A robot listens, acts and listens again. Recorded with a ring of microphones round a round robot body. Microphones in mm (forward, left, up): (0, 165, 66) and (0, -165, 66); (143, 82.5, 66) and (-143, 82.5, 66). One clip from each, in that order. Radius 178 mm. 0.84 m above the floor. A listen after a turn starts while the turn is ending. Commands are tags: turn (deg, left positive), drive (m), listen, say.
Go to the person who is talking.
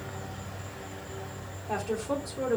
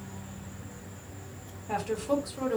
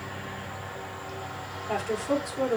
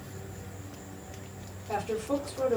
<turn deg="-25"/>
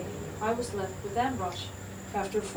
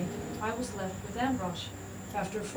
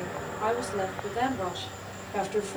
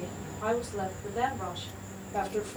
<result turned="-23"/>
<drive m="1.0"/>
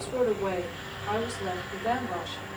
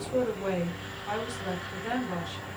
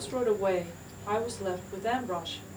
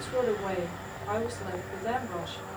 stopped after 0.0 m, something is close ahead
<say>Blocked. The woman speaking is further on, straight ahead.</say>